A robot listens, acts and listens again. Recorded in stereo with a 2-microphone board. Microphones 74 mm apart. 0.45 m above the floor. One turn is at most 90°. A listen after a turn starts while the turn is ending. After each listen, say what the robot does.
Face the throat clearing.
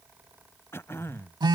Turn 35° left.
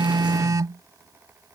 Keep listening.
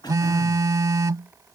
Turn 90° left.
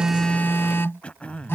Turn 15° left.
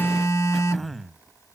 Facing the throat clearing.